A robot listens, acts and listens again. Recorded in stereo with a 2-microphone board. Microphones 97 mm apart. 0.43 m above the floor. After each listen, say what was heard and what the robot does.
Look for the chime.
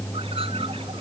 Keep listening.
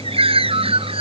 Keep listening.
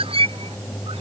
I can't make out a chime to turn to.